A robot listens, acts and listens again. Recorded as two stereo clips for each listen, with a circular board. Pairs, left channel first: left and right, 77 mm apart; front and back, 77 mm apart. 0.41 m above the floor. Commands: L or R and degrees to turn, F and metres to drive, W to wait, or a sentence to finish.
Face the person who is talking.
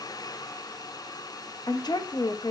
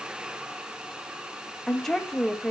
L85
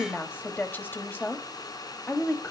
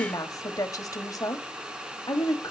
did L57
L30
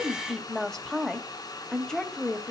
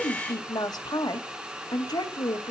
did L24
Facing the woman speaking, 1 to 2 m away.